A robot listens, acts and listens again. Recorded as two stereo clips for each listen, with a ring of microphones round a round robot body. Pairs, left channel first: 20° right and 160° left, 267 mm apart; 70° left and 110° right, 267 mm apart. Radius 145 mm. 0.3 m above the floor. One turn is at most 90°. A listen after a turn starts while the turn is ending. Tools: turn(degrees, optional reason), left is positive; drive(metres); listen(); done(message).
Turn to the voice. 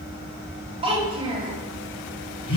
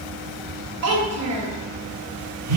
turn(degrees=-90, reason="The child speaking: 135° right.")
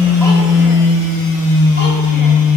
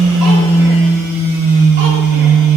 turn(degrees=-45, reason="Nothing new. It was at 45° right.")
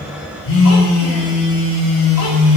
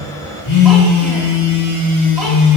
listen()
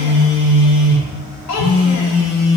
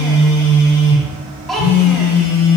turn(degrees=-20, reason="The child speaking is now 20° right.")
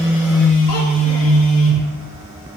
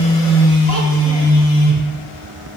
listen()
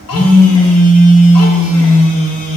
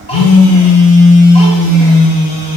listen()
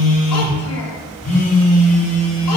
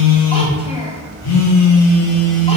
done("Facing where the child speaking came from. I can't hear it now.")